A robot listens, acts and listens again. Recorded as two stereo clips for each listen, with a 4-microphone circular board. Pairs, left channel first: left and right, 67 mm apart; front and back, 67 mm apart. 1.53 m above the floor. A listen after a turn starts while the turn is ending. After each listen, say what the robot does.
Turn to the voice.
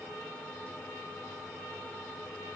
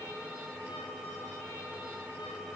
Keep listening.
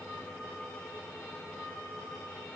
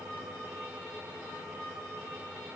Keep listening.
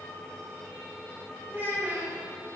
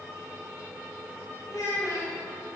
Turn 25° right.
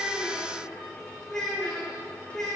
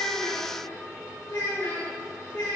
Turn 10° left.
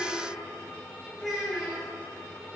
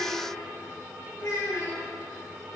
Found it: a child speaking, straight ahead.